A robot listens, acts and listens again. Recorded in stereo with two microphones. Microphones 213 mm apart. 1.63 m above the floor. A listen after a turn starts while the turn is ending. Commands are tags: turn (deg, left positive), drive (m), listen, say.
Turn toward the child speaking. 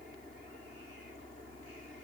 <listen/>
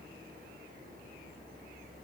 <listen/>
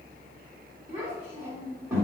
<turn deg="-30"/>
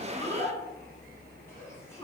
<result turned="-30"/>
<turn deg="15"/>
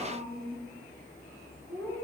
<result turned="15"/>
<say>Found it: a child speaking, straight ahead.</say>